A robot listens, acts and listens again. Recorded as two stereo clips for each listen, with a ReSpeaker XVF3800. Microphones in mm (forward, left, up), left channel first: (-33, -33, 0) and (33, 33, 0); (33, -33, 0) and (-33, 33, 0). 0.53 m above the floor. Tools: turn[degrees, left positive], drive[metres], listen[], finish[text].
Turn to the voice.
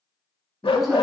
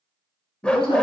Thought: The woman speaking: 40° right.
Action: turn[-40]
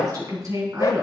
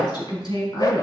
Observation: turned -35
Thought: The woman speaking is now 10° right.
Action: turn[-10]
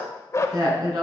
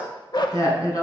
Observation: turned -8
Action: finish[Facing the woman speaking, over 4 m away.]